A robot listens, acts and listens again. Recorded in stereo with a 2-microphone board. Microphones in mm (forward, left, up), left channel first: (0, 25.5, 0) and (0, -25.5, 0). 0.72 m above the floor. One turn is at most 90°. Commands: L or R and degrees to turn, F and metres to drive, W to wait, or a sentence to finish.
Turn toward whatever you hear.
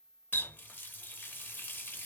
L35
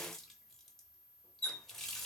Found it: a running tap, straight ahead, under 1 m away.